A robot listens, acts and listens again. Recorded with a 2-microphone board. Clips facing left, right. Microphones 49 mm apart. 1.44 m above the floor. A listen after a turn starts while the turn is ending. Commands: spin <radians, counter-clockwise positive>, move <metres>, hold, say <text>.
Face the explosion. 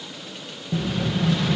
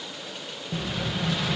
spin 0.52
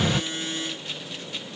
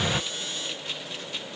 hold
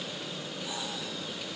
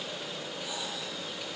say I heard an explosion, but can't make it out now. It was about 30° right or 150° left.